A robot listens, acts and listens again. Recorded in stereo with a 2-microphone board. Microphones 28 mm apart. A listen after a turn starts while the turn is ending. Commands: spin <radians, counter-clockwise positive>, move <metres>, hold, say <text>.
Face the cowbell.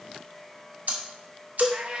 spin 0.61
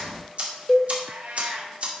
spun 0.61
spin 0.17
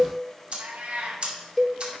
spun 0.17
say Found it: a cowbell, straight ahead.